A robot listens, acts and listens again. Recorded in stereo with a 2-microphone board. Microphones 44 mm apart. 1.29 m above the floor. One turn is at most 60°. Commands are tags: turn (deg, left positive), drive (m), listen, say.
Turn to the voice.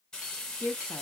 <turn deg="50"/>
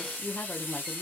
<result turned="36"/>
<turn deg="30"/>
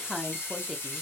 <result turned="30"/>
<say>Facing the woman speaking, under 1 m away.</say>